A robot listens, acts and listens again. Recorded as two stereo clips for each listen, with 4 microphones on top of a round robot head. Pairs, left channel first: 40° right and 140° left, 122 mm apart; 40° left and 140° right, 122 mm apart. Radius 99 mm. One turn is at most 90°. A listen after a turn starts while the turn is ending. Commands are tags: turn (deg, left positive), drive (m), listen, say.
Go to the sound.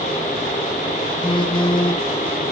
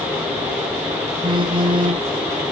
<turn deg="-90"/>
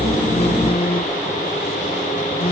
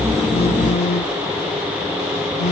<drive m="1.0"/>
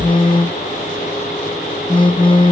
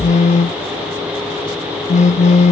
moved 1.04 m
<turn deg="10"/>
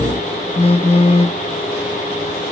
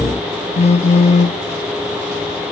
<drive m="1.0"/>
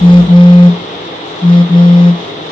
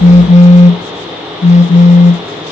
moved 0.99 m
<turn deg="10"/>
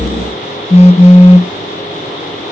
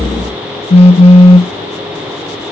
<drive m="1.0"/>
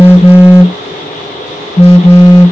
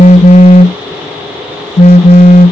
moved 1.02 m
<drive m="1.0"/>
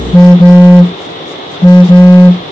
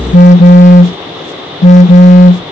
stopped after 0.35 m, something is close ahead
<turn deg="10"/>
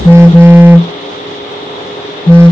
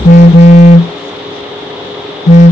<turn deg="10"/>
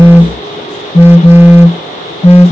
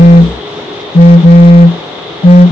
<say>Arrived at the phone buzzing, straight ahead.</say>